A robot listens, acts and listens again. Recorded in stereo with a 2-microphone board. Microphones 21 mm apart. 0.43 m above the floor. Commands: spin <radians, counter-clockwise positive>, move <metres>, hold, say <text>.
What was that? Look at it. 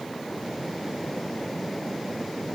hold
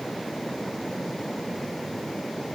hold
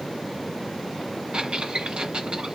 spin -1.13
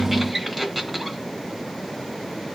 say Found it: a squeak, straight ahead.